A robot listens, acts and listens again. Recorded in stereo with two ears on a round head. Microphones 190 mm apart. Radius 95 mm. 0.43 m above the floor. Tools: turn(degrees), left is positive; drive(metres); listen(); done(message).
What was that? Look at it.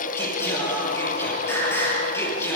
turn(degrees=30)
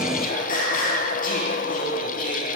turn(degrees=140)
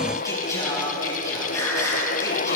turn(degrees=15)
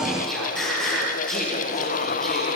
done("Found it: singing, straight ahead.")